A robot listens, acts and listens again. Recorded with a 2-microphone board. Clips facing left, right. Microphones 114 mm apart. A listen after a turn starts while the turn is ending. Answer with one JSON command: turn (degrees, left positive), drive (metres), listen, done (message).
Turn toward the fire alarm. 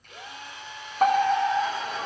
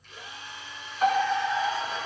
{"turn": 50}
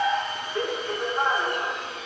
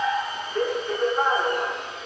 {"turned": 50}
{"done": "Facing the fire alarm."}